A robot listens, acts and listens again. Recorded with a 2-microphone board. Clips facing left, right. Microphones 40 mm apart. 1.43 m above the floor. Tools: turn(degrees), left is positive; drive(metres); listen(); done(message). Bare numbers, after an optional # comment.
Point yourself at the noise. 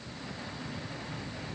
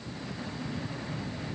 listen()
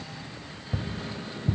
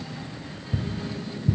# The tapping: about 35° left or 145° left.
turn(35)
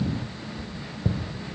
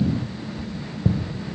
done("Found it: tapping, straight ahead.")